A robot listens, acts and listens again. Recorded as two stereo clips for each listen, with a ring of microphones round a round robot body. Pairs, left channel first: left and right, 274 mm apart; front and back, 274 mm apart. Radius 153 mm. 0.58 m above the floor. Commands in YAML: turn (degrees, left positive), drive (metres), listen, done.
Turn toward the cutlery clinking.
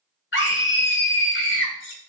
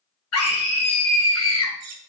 turn: 140
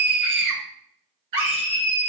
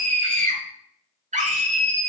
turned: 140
listen: true
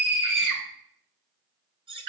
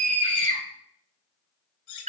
turn: -15
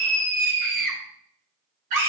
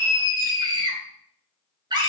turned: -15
listen: true
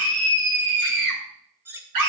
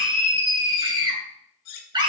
done: "Found it: cutlery clinking, straight ahead."